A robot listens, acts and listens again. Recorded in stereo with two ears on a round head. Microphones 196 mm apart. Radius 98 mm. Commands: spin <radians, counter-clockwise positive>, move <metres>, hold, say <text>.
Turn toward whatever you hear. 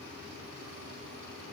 hold
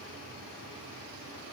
hold
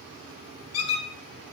spin 1.57
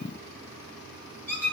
spin 0.17
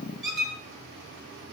say Facing the squeak, 2 to 4 m away.